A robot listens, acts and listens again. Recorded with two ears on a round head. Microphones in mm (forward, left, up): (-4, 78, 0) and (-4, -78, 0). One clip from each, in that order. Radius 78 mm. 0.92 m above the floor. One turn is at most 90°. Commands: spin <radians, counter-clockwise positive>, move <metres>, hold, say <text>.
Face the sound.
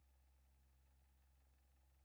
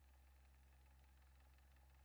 hold
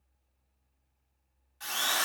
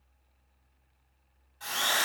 spin 0.96
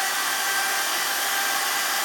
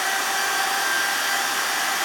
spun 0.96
spin 1.13
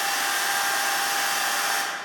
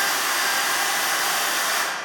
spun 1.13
say Found it: a drill, straight ahead.